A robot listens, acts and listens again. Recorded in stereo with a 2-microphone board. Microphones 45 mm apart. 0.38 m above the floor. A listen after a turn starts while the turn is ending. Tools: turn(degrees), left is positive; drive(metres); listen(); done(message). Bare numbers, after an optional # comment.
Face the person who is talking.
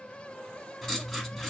listen()
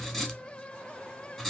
listen()
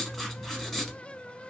done("I can't make out anyone speaking, only writing.")